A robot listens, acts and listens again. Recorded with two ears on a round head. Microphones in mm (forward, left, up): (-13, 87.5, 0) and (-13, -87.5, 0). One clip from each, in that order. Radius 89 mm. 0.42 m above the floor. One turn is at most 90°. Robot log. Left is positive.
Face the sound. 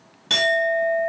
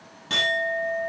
note: The clink: about 50° left or 130° left.
cmd yaw +50
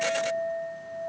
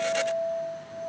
note: So it is at 80° left.
cmd yaw +80
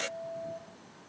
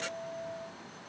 end: Found it: a clink, straight ahead, 2 to 4 m away.